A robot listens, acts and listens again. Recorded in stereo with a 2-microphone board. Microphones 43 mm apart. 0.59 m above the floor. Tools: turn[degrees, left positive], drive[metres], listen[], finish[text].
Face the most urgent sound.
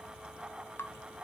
Action: listen[]
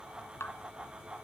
Action: listen[]
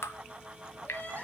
Thought: The crying: about 40° left or 140° left.
Action: turn[40]
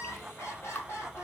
Thought: So it is at 100° left.
Action: turn[100]
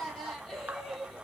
Action: finish[Facing the crying.]